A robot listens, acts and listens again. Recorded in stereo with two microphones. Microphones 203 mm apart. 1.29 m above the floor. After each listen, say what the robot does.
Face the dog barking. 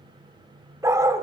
Turn 30° right.
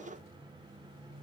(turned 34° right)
Keep listening.
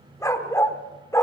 Turn 15° left.
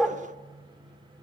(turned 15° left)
Facing the dog barking, 1 to 2 m away.